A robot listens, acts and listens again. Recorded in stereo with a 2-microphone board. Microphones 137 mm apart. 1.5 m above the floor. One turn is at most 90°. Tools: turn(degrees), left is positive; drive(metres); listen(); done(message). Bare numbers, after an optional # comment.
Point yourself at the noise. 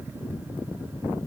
listen()
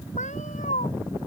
# The cat meowing: about 60° left or 120° left.
turn(60)
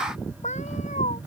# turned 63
# So it is at 55° left.
turn(55)
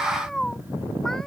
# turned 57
done("Found it: a cat meowing, straight ahead.")